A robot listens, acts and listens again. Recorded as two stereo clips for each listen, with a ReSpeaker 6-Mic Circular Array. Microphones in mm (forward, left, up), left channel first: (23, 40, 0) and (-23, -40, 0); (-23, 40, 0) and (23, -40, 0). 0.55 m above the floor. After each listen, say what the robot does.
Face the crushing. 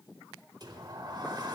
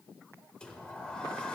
Keep listening.
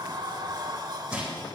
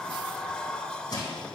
Turn 160° left.
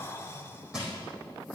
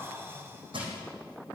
Turn 40° right.
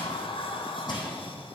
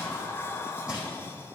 Turn 20° left.
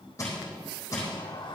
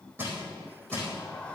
Found it: crushing, straight ahead, over 4 m away.